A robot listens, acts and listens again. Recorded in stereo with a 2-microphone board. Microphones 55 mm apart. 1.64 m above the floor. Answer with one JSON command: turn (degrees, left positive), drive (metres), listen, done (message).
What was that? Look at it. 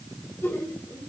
{"turn": 50}
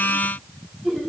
{"done": "Facing the laughter."}